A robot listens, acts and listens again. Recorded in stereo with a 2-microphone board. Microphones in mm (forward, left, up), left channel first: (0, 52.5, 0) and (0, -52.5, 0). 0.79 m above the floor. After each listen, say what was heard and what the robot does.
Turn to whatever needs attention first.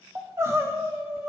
The crying: about 25° right or 155° right. Turn 25° right.
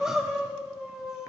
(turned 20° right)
Facing the crying, 1 to 2 m away.